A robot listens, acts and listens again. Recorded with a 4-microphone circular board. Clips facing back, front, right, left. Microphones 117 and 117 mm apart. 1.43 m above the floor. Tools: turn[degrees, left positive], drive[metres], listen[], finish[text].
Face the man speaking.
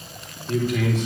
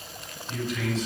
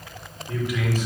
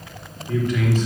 Thought: The man speaking: 170° right.
Action: turn[-170]
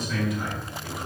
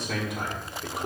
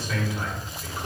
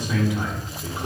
Thought: The man speaking is now 25° left.
Action: turn[25]
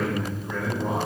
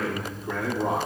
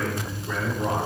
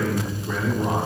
Thought: The man speaking is now 10° left.
Action: turn[10]
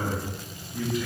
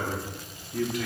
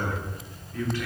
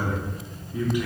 Thought: The man speaking is now 15° left.
Action: turn[15]
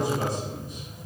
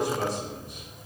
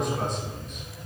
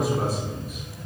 Action: finish[Facing the man speaking.]